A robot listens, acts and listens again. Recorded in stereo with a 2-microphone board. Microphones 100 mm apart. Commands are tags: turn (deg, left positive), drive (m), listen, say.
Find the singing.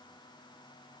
<listen/>
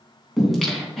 <turn deg="30"/>
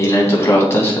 <turn deg="155"/>
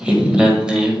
<say>Facing the singing.</say>